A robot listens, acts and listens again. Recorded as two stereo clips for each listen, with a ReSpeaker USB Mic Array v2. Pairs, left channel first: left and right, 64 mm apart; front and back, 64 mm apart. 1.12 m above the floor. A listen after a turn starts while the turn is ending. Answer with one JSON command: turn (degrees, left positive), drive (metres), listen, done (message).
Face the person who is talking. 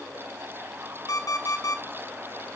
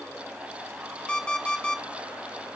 {"listen": true}
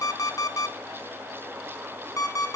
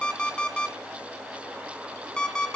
{"listen": true}
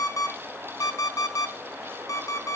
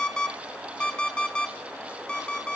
{"done": "I can't make out anyone speaking, only an alarm clock."}